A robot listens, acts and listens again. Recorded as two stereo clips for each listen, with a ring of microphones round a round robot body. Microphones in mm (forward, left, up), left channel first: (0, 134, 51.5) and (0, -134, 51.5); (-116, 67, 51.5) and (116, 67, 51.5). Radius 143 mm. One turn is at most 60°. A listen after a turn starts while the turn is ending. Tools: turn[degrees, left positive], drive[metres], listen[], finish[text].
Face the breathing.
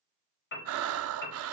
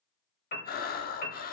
Thought: The breathing: 125° right.
Action: turn[-60]
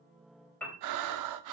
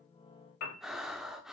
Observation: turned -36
Thought: The breathing is now 90° right.
Action: turn[-60]
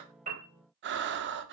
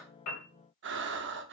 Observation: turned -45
Thought: The breathing is now 40° right.
Action: turn[-40]
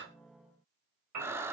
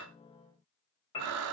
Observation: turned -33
Thought: The breathing is now 10° right.
Action: turn[-10]
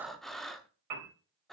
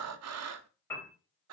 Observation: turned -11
Action: finish[Facing the breathing.]